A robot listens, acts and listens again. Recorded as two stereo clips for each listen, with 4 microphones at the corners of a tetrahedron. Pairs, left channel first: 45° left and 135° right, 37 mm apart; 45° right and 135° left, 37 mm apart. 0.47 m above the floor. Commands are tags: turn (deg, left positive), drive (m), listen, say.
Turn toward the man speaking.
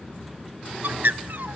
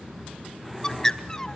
<listen/>
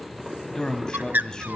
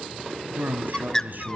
<turn deg="115"/>
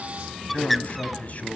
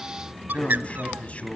<say>Facing the man speaking.</say>